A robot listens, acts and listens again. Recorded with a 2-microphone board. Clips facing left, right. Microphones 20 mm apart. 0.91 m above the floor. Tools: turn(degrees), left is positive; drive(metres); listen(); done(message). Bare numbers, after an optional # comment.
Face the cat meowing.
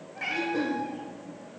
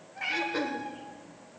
turn(30)
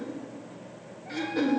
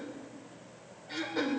listen()
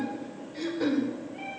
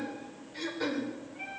# So it is at 95° left.
turn(95)
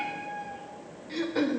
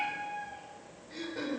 # The cat meowing is now 20° left.
turn(20)
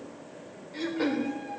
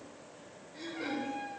done("Found it: a cat meowing, straight ahead, over 4 m away.")